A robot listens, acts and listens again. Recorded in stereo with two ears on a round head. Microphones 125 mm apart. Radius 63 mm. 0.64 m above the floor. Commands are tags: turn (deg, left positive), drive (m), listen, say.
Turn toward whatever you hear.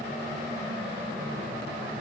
<listen/>
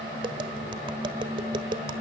<turn deg="-35"/>
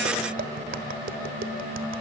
<turn deg="-110"/>
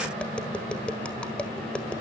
<turn deg="10"/>
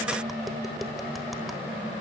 <listen/>
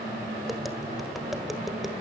<listen/>
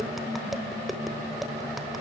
<say>Facing the tapping.</say>